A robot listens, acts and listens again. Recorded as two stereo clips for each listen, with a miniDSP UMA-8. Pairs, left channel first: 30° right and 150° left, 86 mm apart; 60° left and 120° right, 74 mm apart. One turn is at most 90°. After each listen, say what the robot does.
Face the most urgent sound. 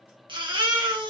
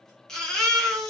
Turn 90° left.
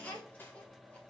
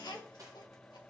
Turn 45° left.
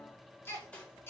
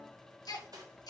Turn 30° left.
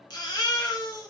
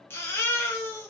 Found it: a baby crying, straight ahead, 1 to 2 m away.